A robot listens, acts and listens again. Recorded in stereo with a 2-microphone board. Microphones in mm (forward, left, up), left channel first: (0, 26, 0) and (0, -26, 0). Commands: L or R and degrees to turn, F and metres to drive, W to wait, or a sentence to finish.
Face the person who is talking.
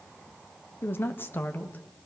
L35
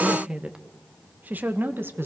R45
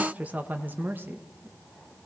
R40
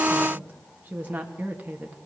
R30
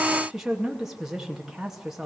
R10
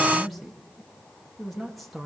Facing the woman speaking.